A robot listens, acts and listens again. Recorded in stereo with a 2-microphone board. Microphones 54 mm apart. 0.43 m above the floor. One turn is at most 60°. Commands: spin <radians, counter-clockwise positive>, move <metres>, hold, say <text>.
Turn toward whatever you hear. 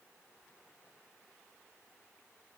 hold
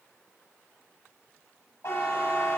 spin 1.05
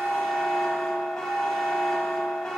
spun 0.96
spin 0.26
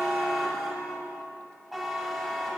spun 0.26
say Found it: a buzzer, straight ahead, 1 to 2 m away.